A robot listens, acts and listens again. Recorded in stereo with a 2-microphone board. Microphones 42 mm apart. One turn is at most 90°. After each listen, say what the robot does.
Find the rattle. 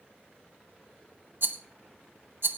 Turn 55° right.
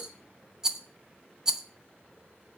Turn 15° right.
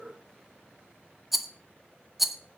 Found it: a rattle, straight ahead.